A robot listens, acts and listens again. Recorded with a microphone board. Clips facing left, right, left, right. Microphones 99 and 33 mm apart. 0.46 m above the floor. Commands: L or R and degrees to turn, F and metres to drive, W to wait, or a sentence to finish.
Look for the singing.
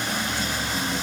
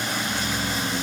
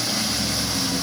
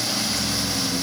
W
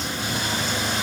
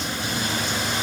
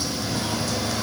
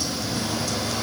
W
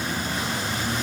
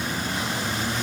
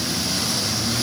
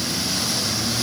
I can't make out singing.